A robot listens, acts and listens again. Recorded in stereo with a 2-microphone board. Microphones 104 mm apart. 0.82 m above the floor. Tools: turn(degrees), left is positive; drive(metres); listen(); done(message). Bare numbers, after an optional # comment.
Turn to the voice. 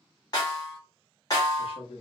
# The man speaking: about 65° left or 115° left.
turn(65)
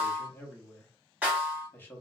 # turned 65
# So it is at 20° left.
turn(20)
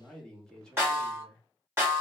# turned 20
# The man speaking is now 10° left.
turn(10)
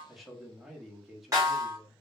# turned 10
done("Found it: a man speaking, straight ahead.")